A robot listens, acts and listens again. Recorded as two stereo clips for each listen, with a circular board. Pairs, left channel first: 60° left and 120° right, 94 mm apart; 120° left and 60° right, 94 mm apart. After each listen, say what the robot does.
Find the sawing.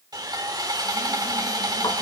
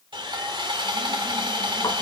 Turn 80° right.
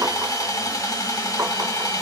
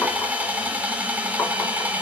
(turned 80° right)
Turn 10° left.
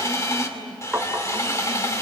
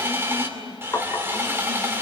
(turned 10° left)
Facing the sawing.